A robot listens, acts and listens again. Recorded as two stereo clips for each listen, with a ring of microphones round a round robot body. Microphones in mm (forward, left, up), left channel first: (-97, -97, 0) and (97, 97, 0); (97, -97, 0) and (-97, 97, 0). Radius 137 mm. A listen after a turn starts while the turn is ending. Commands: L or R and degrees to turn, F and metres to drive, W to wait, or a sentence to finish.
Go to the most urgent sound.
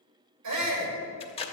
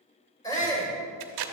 L30
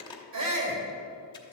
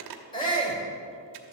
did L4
L25
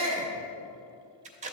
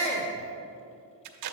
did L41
R15
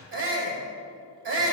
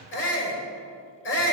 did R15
F1.0
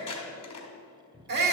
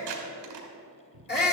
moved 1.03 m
F1.0
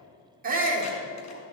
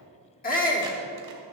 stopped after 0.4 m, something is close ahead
Arrived at the shout, straight ahead.